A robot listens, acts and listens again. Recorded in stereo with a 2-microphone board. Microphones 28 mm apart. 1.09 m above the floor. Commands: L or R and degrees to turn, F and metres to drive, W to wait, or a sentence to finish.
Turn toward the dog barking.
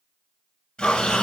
L60
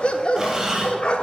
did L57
L50
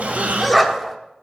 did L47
Found it: a dog barking, straight ahead.